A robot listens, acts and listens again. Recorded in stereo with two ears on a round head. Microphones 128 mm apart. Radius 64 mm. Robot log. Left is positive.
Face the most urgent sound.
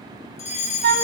note: The fire alarm: about 55° left or 125° left.
cmd yaw +55
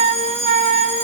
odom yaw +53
note: So it is at 55° left.
cmd yaw +55
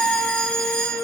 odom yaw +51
end: Facing the fire alarm.